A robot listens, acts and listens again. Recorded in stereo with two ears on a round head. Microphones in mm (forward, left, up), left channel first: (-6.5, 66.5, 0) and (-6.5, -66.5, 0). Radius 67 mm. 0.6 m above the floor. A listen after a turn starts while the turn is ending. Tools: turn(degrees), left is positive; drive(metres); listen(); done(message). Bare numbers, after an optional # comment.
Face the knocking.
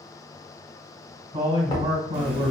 # The knocking: about 30° left or 150° left.
turn(30)
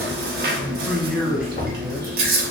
# So it is at 115° left.
turn(115)
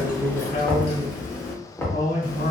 # The knocking is now 15° left.
turn(15)
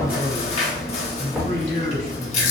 done("Facing the knocking.")